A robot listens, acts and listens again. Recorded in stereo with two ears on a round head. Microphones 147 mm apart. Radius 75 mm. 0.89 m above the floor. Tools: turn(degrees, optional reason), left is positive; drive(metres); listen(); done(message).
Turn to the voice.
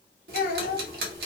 turn(degrees=55, reason="The child speaking: about 55° left or 125° left.")
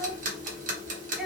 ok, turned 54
listen()
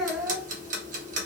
done("Found it: a child speaking, straight ahead.")